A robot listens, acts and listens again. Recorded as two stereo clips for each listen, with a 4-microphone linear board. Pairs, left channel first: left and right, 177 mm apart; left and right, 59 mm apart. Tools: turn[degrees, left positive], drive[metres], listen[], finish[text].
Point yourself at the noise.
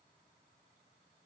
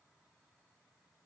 Action: listen[]
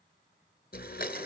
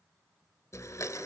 Thought: The blender: about 55° left or 125° left.
Action: turn[55]
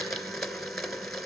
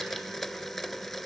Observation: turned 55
Action: finish[Found it: a blender, straight ahead.]